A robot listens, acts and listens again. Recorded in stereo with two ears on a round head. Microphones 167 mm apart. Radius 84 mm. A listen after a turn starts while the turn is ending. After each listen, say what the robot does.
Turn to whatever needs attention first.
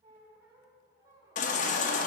Turn 40° left.
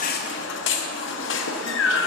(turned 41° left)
Turn 95° left.
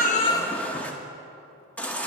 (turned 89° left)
Turn 10° left.
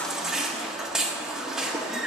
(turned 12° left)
Found it: a baby crying, straight ahead, under 1 m away.